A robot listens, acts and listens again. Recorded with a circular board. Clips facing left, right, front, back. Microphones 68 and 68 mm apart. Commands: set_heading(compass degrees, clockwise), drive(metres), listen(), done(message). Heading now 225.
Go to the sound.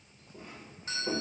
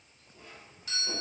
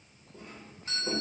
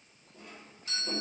set_heading(190)
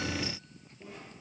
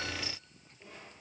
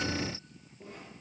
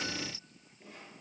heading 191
listen()
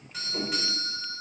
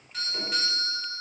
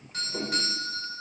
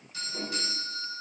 drive(1.0)
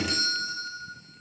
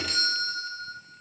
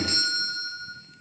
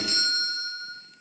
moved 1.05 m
drive(1.0)
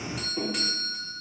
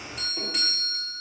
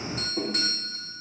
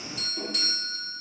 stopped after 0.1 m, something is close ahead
done("I am next to the doorbell.")